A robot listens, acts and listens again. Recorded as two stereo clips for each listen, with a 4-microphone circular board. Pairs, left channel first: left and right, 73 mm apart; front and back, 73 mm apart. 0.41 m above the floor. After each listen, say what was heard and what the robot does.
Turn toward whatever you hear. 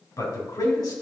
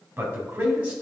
The man speaking: 110° left. Turn 110° left.
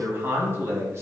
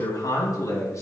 The man speaking is now 40° right. Turn 40° right.
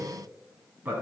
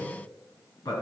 The man speaking is now 25° right. Turn 25° right.
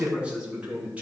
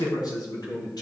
The man speaking is now 20° right. Turn 20° right.
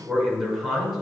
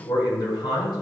Found it: a man speaking, straight ahead.